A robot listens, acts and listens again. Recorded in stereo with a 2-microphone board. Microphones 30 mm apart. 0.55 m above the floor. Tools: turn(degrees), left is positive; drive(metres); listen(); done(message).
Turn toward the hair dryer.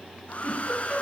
turn(degrees=45)
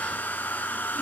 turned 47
turn(degrees=90)
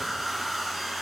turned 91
done("Facing the hair dryer, 1 to 2 m away.")